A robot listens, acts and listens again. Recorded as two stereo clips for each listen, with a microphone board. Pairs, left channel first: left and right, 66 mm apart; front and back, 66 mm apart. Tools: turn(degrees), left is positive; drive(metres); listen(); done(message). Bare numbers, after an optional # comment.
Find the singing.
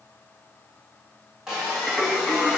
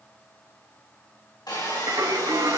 # The singing: 175° left.
turn(175)
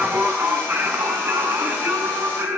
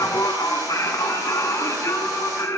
# The singing is now 45° right.
turn(-45)
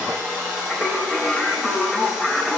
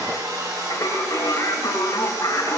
done("Facing the singing.")